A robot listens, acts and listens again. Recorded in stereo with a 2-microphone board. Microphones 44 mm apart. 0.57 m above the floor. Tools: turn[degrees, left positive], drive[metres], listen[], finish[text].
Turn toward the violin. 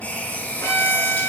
Action: turn[90]
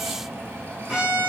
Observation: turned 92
Thought: So it is at 15° right.
Action: turn[-15]
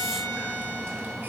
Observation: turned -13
Action: finish[Facing the violin, over 4 m away.]